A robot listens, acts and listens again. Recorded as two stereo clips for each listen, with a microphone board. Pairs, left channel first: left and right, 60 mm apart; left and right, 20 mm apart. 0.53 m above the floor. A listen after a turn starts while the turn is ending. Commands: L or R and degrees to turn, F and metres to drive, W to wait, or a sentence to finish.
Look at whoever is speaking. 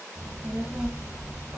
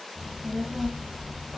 R30
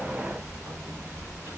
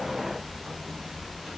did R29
R155
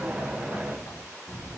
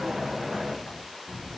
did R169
Found it: a child speaking, straight ahead.